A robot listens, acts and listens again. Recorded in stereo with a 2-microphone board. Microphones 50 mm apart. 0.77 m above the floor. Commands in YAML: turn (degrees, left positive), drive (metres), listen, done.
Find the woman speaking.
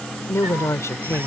turn: 75
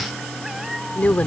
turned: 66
turn: 30
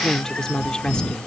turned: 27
turn: 15
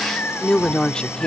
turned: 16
turn: 20
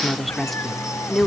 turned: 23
done: "Found it: a woman speaking, straight ahead."